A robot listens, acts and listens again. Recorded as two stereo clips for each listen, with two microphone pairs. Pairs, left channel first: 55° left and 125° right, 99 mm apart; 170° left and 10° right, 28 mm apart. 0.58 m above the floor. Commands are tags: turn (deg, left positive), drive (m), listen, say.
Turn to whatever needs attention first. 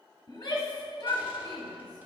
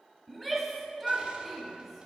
<turn deg="95"/>
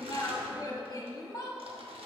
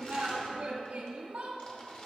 <turn deg="20"/>
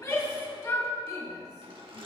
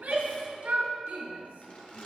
<turn deg="10"/>
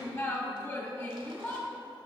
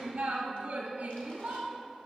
<say>Found it: a shout, straight ahead, 1 to 2 m away.</say>